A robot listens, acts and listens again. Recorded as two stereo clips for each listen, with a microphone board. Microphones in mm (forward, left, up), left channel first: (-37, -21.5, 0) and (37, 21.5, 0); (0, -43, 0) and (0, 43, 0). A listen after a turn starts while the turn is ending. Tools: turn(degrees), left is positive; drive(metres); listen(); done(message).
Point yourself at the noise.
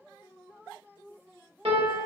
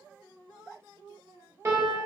turn(degrees=30)
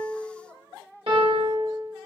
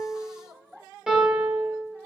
done("Facing the piano, under 1 m away.")